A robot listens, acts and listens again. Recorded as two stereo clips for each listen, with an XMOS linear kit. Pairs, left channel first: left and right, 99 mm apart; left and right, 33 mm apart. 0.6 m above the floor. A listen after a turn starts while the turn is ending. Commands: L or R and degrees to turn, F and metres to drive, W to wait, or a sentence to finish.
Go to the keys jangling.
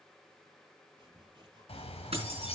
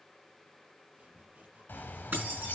R90
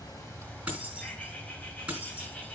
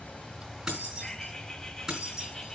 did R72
R15
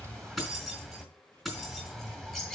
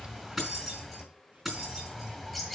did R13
F1.0
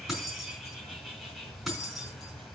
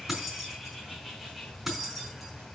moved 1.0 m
F1.0
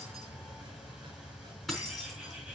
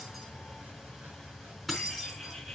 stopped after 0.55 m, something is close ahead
Blocked. The keys jangling is further on, straight ahead.